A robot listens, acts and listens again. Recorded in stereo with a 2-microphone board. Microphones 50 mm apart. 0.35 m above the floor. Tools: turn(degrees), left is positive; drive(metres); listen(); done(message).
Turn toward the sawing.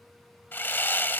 turn(degrees=45)
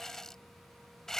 turn(degrees=10)
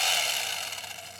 done("Facing the sawing.")